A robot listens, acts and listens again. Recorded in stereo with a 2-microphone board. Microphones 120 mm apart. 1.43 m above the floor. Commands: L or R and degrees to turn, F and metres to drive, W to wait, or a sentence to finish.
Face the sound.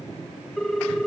L30
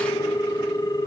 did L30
L145
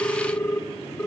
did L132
L15
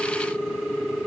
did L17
Found it: a ringtone, straight ahead, under 1 m away.